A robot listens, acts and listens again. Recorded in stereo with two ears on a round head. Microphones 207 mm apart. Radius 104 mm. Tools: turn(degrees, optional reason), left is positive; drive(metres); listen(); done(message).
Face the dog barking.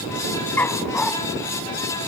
turn(degrees=30)
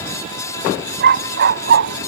turn(degrees=-55, reason="So it is at 55° right.")
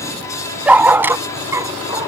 turn(degrees=-15, reason="The dog barking is now 15° right.")
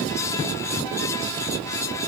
listen()
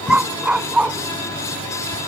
done("Facing the dog barking.")